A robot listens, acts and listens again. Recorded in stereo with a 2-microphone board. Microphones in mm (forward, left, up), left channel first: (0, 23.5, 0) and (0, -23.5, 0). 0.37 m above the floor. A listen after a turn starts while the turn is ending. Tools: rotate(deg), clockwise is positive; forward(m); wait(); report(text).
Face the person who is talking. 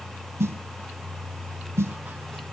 wait()
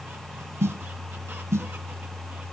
wait()
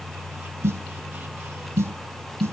report("I can't make out anyone speaking to turn to.")